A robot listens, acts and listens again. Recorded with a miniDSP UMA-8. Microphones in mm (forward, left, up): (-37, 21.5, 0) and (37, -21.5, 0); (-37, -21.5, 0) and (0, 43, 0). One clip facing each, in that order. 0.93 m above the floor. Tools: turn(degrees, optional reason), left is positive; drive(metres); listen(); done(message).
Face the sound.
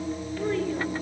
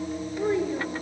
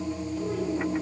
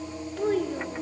turn(degrees=40, reason="The child speaking: 40° left.")
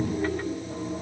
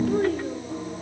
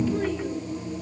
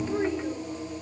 done("Facing the child speaking.")